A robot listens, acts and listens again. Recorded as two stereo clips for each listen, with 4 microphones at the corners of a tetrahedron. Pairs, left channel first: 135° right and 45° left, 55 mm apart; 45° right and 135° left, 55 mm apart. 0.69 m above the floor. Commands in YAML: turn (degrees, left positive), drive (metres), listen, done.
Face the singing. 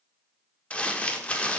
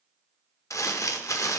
listen: true
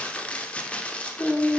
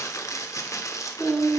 turn: -145
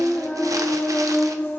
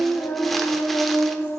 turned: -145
turn: -90
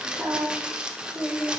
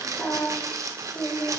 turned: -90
turn: -25
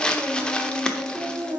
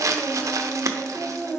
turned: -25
turn: 10
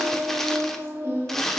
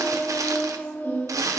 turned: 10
done: "Found it: singing, straight ahead."